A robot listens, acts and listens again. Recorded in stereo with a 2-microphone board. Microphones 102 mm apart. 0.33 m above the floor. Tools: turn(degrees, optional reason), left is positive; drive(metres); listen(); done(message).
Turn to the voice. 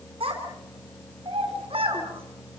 turn(degrees=-70, reason="The child speaking: about 70° right or 110° right.")
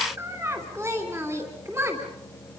turn(degrees=-30, reason="So it is at 30° right.")
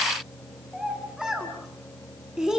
done("Found it: a child speaking, straight ahead.")